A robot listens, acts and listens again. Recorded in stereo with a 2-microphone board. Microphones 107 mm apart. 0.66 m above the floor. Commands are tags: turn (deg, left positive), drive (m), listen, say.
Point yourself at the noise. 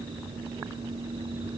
<listen/>
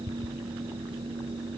<listen/>
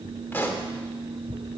<turn deg="20"/>
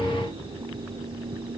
<listen/>
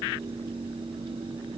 <say>I heard a pop, but can't make it out now. It was about straight ahead or 140° left.</say>